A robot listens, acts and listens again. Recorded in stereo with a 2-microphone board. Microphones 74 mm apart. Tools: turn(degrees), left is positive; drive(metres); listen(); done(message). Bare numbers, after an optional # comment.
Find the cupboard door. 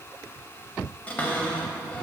# The cupboard door: about 20° left or 160° left.
turn(20)
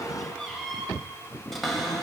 done("Found it: a cupboard door, straight ahead, 1 to 2 m away.")